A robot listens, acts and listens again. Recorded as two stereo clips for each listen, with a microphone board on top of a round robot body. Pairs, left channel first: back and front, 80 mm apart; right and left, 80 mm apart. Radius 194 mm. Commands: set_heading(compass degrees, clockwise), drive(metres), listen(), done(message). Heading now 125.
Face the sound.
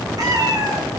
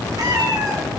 set_heading(80)
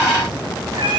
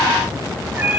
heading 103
set_heading(78)
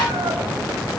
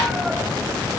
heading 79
listen()
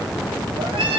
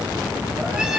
set_heading(69)
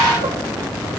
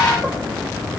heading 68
listen()
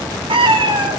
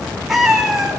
done("Facing the cat meowing.")